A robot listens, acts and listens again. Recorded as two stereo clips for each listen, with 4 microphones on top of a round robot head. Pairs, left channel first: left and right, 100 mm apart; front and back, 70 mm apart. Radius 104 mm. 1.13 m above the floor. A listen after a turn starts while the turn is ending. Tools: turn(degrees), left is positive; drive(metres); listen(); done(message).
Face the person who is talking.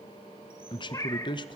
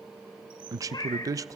turn(degrees=140)
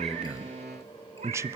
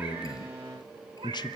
turn(degrees=-25)
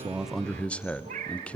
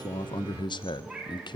turn(degrees=10)
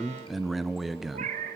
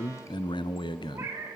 done("Found it: a man speaking, straight ahead.")